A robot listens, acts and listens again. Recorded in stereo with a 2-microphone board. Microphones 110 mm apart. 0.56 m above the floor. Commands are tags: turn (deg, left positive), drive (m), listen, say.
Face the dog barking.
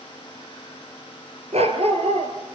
<turn deg="-65"/>
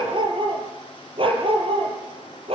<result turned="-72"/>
<turn deg="-60"/>
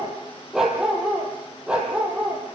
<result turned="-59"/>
<turn deg="-10"/>
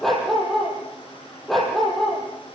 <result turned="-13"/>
<say>Facing the dog barking.</say>